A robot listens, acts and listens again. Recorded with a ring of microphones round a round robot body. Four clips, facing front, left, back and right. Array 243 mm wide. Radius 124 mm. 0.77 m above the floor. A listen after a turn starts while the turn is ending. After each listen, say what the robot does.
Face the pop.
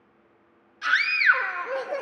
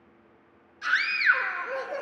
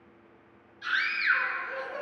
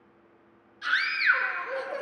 Keep listening.
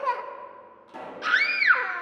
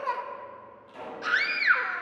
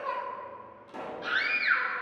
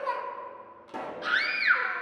Turn 90° right.
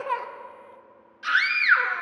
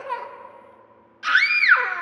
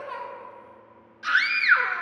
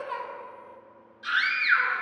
I heard a pop from this way, but can't make it out now.